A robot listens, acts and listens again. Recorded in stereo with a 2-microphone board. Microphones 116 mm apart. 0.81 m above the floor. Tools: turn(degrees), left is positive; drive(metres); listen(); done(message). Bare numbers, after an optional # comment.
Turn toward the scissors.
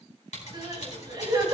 # The scissors: about 75° left or 105° left.
turn(75)
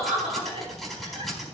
done("Facing the scissors.")